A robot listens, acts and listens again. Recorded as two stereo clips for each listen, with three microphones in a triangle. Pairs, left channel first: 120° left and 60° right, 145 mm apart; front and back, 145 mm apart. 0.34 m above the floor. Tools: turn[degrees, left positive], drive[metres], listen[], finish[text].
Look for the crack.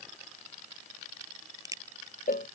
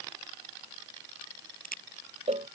Action: finish[Found it: a crack, straight ahead.]